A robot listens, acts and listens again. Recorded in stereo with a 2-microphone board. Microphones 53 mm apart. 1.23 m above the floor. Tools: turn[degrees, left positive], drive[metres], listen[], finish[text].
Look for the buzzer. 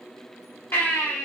Action: listen[]
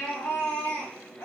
Action: listen[]
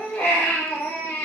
Action: finish[I can't make out a buzzer, only a baby crying.]